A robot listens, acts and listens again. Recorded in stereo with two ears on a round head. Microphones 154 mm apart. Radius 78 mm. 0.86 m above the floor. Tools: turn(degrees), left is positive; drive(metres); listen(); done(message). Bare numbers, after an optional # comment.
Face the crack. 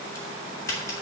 # The crack: about 20° left or 160° left.
turn(20)
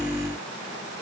listen()
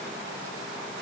done("I heard a crack, but can't make it out now. It was about straight ahead or 140° left.")